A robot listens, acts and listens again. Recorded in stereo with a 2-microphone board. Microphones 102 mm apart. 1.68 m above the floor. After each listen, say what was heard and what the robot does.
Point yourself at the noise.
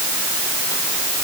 Keep listening.
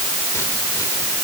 Keep listening.
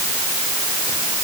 I can't make out anything to turn to.